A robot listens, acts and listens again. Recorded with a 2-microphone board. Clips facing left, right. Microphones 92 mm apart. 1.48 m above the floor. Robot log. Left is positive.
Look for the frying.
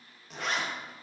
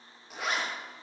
cmd idle
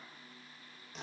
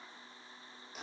cmd idle
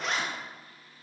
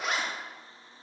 end: I can't make out frying to turn to.